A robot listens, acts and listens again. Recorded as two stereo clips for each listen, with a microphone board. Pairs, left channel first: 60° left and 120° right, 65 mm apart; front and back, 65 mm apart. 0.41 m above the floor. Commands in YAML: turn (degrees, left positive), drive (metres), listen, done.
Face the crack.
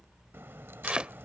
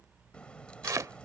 turn: -75
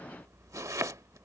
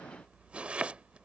done: "I heard a crack from this way, but can't make it out now."